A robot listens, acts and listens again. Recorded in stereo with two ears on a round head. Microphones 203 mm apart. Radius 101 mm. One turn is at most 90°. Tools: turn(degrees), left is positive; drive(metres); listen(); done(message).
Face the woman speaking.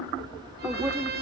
turn(degrees=-30)
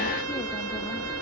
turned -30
listen()
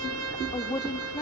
turn(degrees=20)
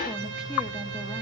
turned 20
listen()
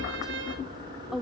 done("Found it: a woman speaking, straight ahead, 1 to 2 m away.")